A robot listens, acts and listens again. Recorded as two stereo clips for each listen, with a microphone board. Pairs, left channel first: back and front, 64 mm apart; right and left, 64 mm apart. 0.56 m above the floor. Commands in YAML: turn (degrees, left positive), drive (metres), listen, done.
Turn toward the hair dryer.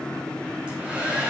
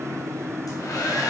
turn: -70
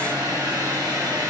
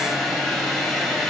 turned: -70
done: "Found it: a hair dryer, straight ahead, 2 to 4 m away."